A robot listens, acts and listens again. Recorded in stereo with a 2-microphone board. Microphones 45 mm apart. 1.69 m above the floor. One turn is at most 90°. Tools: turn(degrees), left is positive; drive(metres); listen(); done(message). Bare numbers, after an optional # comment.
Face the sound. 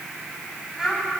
turn(-30)
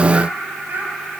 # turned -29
# So it is at 135° right.
turn(-90)
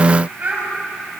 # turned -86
# The child speaking is now 40° right.
turn(-40)
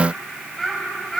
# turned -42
# The child speaking is now 10° left.
turn(10)
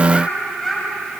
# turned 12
done("Found it: a child speaking, straight ahead, over 4 m away.")